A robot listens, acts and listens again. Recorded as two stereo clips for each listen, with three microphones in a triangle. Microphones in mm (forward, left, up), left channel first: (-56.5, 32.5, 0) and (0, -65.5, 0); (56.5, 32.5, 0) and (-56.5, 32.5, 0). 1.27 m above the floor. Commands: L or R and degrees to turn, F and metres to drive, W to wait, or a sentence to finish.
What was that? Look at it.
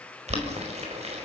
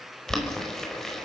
R85
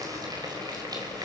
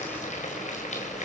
Facing the boiling, over 4 m away.